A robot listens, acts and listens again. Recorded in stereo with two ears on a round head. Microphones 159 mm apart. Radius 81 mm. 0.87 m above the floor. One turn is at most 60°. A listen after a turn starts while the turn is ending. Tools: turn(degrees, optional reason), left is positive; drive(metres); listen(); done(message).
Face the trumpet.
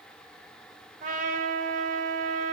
turn(degrees=-50, reason="The trumpet: about 50° right or 130° right.")
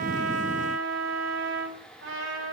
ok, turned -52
turn(degrees=-60, reason="So it is at 80° right.")
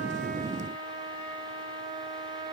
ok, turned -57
turn(degrees=-25, reason="The trumpet is now 25° right.")
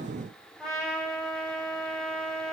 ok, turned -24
done("Facing the trumpet, 2 to 4 m away.")